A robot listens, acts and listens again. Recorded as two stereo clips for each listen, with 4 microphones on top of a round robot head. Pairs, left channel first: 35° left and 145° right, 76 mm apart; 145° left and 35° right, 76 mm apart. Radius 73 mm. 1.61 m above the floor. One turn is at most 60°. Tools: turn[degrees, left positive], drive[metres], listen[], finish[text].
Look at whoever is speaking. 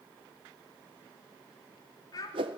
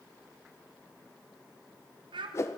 Thought: The child speaking: 10° right.
Action: turn[-10]
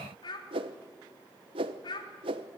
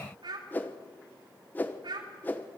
Action: finish[Facing the child speaking.]